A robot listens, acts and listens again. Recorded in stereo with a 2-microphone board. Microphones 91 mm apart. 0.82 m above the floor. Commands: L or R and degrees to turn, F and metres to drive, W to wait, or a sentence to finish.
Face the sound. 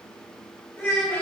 L30
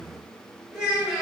R15
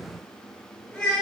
Found it: a child speaking, straight ahead, 1 to 2 m away.